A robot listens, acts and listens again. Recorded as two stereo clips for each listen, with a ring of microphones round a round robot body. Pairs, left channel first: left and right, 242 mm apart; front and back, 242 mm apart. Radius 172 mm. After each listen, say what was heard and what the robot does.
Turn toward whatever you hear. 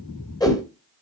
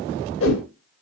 The whoosh: 15° left. Turn 15° left.
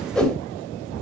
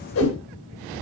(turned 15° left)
Found it: a whoosh, straight ahead.